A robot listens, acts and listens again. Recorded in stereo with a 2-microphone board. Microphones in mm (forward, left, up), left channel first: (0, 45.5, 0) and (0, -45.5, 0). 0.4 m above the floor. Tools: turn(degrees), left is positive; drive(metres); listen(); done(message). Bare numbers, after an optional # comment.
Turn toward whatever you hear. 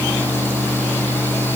listen()
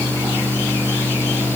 listen()
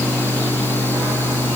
done("I can't make out anything to turn to.")